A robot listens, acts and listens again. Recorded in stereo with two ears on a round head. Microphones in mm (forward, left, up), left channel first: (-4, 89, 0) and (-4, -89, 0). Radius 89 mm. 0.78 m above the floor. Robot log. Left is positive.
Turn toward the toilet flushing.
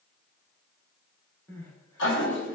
note: The toilet flushing: about 60° left or 120° left.
cmd yaw +60
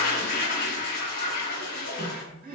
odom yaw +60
note: So it is at 50° left.
cmd yaw +50
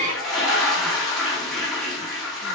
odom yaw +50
end: Found it: a toilet flushing, straight ahead.